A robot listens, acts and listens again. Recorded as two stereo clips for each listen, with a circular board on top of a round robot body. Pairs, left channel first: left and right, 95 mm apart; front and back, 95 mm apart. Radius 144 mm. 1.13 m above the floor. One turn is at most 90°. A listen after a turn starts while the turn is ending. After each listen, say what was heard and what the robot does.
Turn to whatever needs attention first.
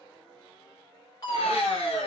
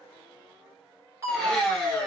The fire alarm: 130° left. Turn 90° left.
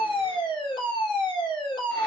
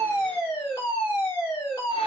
The fire alarm is now 55° left. Turn 55° left.
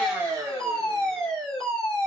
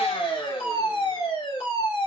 Facing the fire alarm, 2 to 4 m away.